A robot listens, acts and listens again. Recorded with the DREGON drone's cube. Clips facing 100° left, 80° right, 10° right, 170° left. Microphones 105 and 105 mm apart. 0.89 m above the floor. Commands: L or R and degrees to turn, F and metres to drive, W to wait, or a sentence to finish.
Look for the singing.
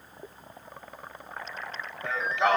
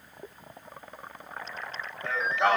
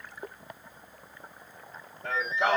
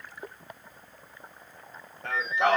R165
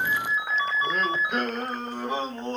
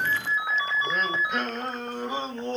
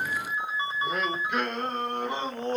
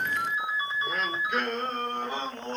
L65
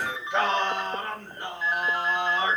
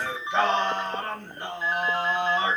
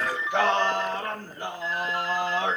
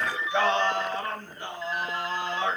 L10
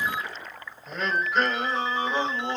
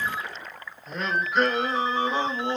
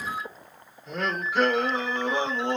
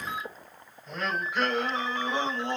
Found it: singing, straight ahead.